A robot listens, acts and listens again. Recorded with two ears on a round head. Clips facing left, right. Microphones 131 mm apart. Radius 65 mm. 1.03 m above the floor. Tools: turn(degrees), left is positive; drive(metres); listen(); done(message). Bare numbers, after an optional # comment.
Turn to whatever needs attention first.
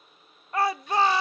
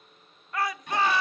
# The shout: about 25° left or 155° left.
turn(25)
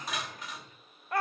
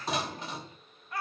# So it is at 130° left.
turn(130)
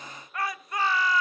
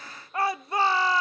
# The shout is now 25° right.
turn(-25)
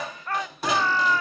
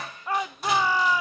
# The shout is now 10° right.
turn(-10)
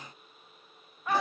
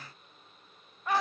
done("Found it: a shout, straight ahead, under 1 m away.")